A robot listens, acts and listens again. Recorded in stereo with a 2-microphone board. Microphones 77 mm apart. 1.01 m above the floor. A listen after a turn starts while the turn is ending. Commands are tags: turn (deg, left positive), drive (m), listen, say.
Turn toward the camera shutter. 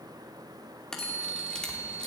<turn deg="30"/>
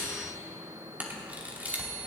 <turn deg="-20"/>
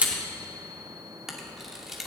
<say>Found it: a camera shutter, straight ahead.</say>